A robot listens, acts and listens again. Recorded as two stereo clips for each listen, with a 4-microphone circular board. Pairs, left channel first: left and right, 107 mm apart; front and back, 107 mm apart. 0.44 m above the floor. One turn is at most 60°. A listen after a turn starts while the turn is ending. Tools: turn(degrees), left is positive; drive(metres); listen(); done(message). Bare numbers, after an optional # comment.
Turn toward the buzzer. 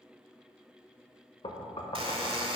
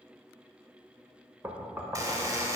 # The buzzer: 120° right.
turn(-60)
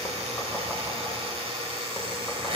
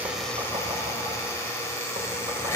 # The buzzer is now 65° right.
turn(-60)
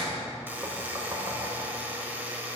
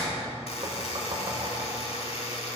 # The buzzer is now 15° right.
turn(-15)
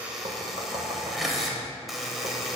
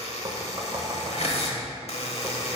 done("Found it: a buzzer, straight ahead.")